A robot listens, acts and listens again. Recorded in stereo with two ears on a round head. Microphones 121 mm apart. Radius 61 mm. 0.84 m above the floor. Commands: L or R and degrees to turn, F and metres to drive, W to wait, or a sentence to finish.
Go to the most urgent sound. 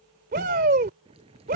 R65
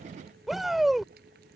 F1.0
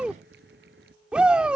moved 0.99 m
R10
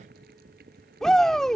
F1.0
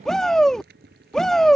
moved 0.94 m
F1.0
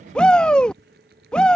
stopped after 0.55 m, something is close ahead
L10
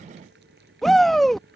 I am next to the shout.